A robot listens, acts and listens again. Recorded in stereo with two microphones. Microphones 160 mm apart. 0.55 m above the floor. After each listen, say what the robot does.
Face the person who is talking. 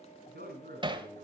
Turn 90° right.
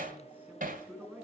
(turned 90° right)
Turn 10° right.
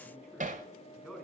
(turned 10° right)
Facing the man speaking, over 4 m away.